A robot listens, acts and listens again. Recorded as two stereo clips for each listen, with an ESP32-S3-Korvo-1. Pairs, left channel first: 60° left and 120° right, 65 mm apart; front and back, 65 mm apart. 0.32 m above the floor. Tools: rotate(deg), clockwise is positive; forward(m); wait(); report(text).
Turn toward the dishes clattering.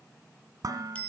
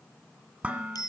rotate(110)
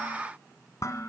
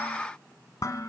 rotate(-25)
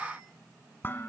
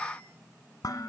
report("Facing the dishes clattering, 1 to 2 m away.")